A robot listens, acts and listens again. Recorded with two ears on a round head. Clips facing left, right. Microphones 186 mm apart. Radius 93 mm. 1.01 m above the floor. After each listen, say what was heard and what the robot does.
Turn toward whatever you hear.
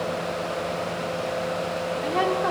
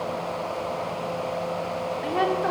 Turn 30° left.
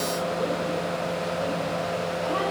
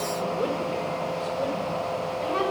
So it is at 35° right. Turn 35° right.
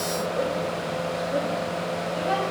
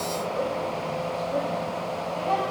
The woman speaking is now 15° left. Turn 15° left.
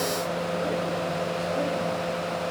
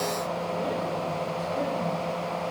Keep listening.
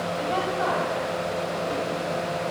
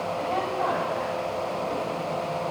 Found it: a woman speaking, straight ahead, over 4 m away.